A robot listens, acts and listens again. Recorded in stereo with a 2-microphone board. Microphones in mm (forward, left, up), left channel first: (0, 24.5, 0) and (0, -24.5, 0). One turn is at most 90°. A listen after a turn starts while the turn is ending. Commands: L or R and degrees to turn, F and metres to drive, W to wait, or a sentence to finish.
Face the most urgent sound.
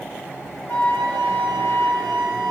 W
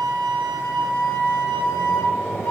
W
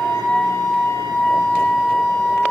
I can't make out anything urgent, only a flute.